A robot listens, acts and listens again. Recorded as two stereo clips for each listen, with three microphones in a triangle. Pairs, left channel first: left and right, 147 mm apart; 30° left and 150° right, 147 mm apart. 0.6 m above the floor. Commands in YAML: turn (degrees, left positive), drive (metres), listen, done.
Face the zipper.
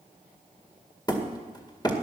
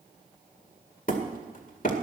listen: true
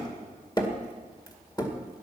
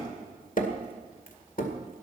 listen: true
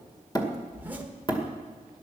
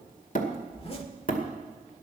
turn: -15
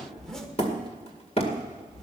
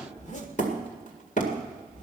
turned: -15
done: "Found it: a zipper, straight ahead."